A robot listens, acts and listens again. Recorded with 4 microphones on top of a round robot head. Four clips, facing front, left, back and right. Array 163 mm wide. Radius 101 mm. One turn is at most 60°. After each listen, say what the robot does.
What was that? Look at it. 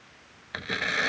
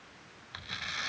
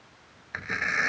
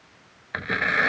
Turn 60° right.
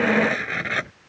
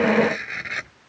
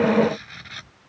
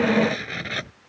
Turn 25° right.
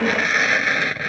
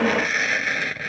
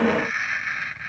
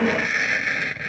Turn 10° left.
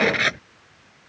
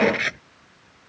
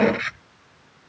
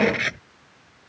Found it: tearing paper, straight ahead.